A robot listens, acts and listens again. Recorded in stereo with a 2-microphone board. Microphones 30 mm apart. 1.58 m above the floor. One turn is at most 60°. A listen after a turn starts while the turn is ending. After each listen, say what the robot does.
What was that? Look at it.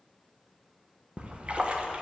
Turn 40° right.
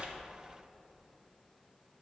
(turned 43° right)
Keep listening.
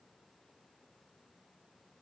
I heard a splash, but can't make it out now. It was about 5° left or 95° right.